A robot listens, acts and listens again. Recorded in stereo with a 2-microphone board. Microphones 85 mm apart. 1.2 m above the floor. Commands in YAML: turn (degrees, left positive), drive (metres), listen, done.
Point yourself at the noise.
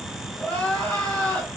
turn: 15
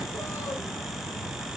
listen: true
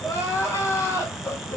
turn: 145
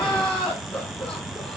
turn: 10
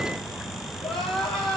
done: "Facing the crying."